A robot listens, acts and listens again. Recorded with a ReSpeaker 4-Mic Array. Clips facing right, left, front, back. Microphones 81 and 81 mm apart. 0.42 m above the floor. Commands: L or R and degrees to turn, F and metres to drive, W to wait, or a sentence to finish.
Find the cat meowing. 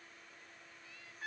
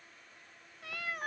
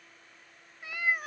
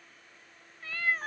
L75
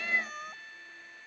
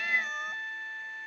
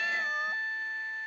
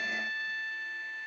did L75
W
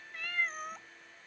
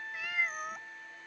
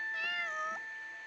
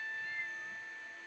Found it: a cat meowing, straight ahead.